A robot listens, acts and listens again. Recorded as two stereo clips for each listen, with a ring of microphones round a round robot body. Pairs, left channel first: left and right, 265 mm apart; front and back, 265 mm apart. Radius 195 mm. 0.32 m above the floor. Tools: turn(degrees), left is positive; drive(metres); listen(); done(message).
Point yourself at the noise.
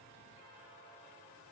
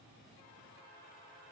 listen()
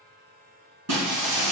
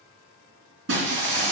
turn(degrees=-125)
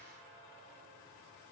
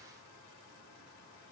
done("I heard breaking glass from this way, but can't make it out now.")